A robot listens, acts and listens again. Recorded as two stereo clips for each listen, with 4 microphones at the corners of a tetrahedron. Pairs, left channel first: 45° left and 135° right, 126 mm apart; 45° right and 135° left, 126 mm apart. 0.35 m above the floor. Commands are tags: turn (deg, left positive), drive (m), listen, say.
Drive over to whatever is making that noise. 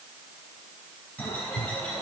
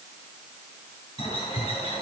<turn deg="-30"/>
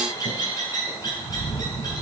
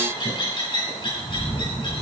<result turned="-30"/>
<drive m="1.0"/>
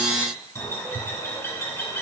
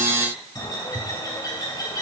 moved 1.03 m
<turn deg="-10"/>
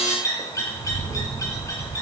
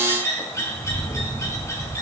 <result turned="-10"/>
<drive m="1.0"/>
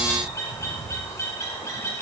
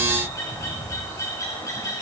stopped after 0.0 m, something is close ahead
<say>Arrived at the bird, straight ahead.</say>